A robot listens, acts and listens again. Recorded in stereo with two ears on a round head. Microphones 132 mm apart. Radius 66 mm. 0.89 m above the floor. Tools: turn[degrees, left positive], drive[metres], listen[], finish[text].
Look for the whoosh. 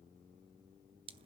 Action: listen[]
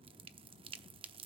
Action: listen[]
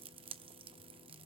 Action: finish[I can't make out a whoosh, only dripping.]